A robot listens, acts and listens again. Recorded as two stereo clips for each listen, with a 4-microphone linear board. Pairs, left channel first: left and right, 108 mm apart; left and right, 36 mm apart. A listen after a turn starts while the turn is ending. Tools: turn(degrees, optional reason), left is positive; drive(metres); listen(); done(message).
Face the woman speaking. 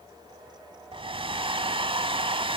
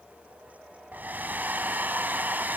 listen()
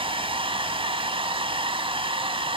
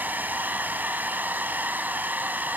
listen()
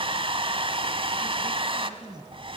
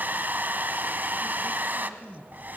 turn(degrees=-50, reason="The woman speaking: about 50° right or 130° right.")
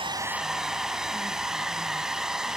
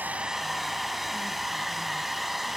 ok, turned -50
listen()
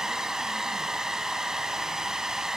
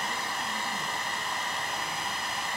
listen()
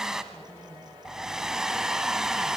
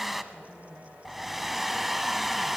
done("I heard a woman speaking, but can't make it out now. It was about straight ahead or 80° right.")